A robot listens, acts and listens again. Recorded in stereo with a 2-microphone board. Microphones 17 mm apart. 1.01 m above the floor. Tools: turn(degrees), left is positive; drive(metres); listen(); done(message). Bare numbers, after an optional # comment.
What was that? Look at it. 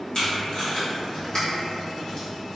# The tape being pulled: about 50° left or 130° left.
turn(50)
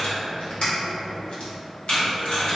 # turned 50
# So it is at 80° left.
turn(80)
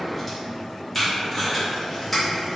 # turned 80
done("Found it: tape being pulled, straight ahead, 1 to 2 m away.")